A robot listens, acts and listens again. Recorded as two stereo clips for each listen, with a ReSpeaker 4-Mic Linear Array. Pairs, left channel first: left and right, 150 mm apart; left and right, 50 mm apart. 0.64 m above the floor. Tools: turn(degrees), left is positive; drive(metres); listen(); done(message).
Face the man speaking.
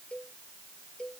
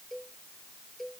listen()
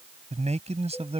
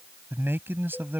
turn(degrees=-45)
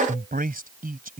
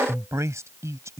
turn(degrees=-110)
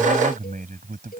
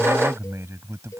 turn(degrees=-70)
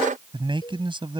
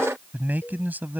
turn(degrees=-35)
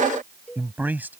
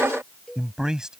turn(degrees=-10)
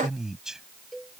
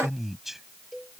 done("Found it: a man speaking, straight ahead.")